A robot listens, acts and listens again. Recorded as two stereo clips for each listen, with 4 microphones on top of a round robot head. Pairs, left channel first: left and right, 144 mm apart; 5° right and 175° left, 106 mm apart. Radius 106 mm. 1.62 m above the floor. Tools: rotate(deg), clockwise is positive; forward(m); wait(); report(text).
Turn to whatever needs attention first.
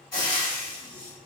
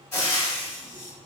wait()
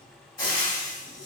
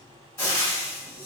wait()
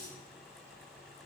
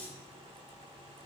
report("I can't make out anything urgent, only frying.")